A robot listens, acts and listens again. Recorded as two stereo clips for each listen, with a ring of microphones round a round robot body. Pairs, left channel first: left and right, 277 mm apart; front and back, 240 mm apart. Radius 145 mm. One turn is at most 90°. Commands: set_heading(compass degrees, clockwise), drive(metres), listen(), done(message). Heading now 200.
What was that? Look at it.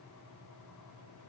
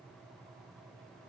listen()
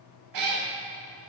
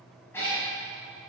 set_heading(285)
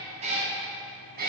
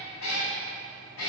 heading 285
set_heading(320)
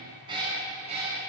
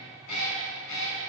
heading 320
set_heading(340)
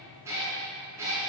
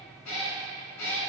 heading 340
set_heading(350)
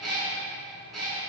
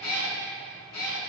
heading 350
done("Facing the cat meowing, 2 to 4 m away.")